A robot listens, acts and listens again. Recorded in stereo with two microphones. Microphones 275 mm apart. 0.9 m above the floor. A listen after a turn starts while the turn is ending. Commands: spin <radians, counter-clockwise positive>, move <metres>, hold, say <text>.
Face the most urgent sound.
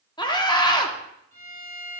spin 0.26
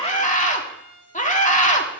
spin 2.71
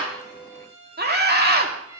spin -0.70
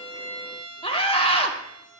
spin 0.35
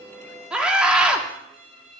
say Facing the scream.